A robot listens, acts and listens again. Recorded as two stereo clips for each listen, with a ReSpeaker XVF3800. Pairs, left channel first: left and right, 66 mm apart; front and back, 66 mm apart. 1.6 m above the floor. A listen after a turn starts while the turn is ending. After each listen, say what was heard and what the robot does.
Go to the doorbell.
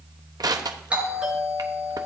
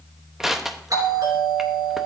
The doorbell: 160° right. Turn 160° right.
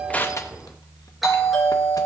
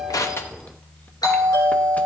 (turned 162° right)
Drive 1.0 m forward.
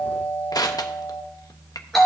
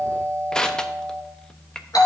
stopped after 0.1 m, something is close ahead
Blocked. The doorbell is further on, straight ahead.